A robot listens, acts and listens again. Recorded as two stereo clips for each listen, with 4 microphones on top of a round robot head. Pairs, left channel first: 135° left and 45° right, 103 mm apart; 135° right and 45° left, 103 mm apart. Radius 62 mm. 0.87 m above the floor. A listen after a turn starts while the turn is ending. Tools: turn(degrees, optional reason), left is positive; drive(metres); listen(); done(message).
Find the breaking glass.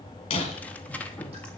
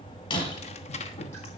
turn(degrees=175, reason="The breaking glass: 175° left.")
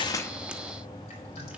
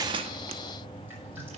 done("Facing where the breaking glass came from. I can't hear it now.")